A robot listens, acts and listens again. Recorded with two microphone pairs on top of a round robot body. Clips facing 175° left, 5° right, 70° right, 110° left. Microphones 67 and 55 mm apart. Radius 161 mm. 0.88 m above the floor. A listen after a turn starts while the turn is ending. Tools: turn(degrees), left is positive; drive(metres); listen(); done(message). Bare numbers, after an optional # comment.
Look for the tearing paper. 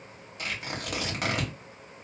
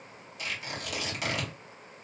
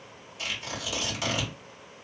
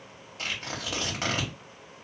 # The tearing paper: 135° left.
turn(135)
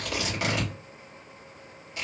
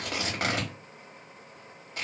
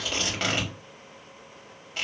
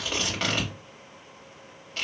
# The tearing paper is now 10° left.
turn(10)
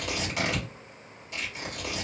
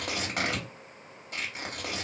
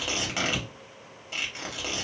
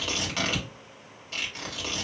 done("Found it: tearing paper, straight ahead, 1 to 2 m away.")